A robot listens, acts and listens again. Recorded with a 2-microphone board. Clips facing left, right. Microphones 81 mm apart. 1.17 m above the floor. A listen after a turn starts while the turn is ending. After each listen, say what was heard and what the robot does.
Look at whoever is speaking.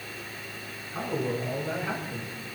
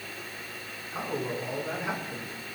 Turn 30° right.
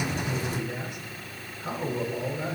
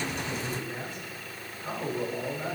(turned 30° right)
So it is at 20° left. Turn 20° left.
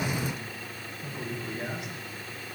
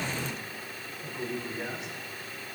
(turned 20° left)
Facing the man speaking, over 4 m away.